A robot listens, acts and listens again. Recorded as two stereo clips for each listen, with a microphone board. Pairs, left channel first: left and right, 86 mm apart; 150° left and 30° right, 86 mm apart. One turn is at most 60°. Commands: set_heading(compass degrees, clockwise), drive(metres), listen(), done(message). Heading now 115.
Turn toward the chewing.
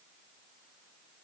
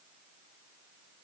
listen()
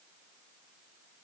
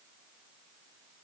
listen()
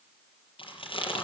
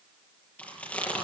set_heading(55)
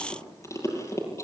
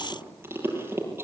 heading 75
set_heading(40)
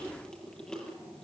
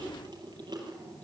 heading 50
set_heading(40)
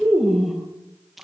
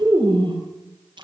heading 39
done("Facing the chewing, over 4 m away.")